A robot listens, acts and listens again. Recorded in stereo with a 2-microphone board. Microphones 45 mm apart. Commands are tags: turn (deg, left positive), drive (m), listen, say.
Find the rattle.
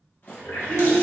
<turn deg="40"/>
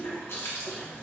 <listen/>
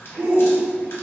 <listen/>
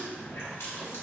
<say>I heard a rattle, but can't make it out now. It was about straight ahead or 100° left.</say>